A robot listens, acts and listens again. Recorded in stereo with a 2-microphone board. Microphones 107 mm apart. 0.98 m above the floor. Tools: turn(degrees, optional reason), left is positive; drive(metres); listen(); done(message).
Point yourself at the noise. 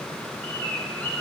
turn(degrees=30)
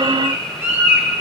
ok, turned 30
turn(degrees=-20, reason="So it is at 20° right.")
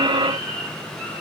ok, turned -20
done("Found it: a bird, straight ahead.")